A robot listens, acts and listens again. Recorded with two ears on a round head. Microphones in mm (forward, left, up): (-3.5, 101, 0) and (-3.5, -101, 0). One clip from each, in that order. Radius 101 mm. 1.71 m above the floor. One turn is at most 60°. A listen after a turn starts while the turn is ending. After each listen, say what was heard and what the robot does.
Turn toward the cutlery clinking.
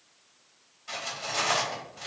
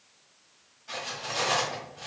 The cutlery clinking: about 35° left or 145° left. Turn 35° left.
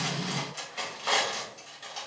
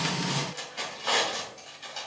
Found it: cutlery clinking, straight ahead, 2 to 4 m away.